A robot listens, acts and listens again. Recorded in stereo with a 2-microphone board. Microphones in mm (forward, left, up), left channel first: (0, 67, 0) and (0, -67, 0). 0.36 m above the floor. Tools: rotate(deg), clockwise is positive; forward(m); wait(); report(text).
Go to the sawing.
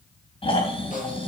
wait()
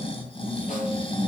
wait()
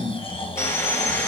rotate(-20)
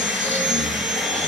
forward(1.0)
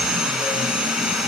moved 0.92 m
forward(1.0)
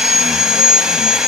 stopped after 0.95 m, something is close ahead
report("Arrived at the sawing, straight ahead.")